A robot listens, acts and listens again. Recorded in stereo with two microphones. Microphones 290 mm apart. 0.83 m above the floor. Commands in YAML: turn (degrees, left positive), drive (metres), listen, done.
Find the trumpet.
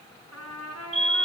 turn: 65
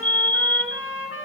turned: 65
turn: 50
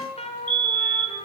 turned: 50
turn: 20
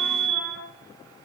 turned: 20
listen: true
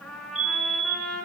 done: "Facing the trumpet, over 4 m away."